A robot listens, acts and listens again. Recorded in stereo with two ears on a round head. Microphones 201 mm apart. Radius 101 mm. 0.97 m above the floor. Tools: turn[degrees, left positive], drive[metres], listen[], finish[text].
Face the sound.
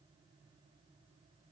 Action: listen[]
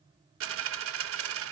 Thought: The dropped coin: about 65° right or 115° right.
Action: turn[-65]
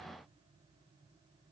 Action: listen[]
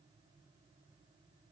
Action: finish[I heard a dropped coin, but can't make it out now. It was about straight ahead or 50° right.]